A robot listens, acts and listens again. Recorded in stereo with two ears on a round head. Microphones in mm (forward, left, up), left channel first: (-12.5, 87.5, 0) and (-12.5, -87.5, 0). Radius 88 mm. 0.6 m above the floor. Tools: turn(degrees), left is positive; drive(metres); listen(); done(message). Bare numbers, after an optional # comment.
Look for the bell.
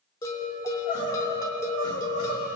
# The bell: about 20° left or 160° left.
turn(20)
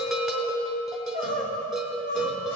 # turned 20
done("Found it: a bell, straight ahead.")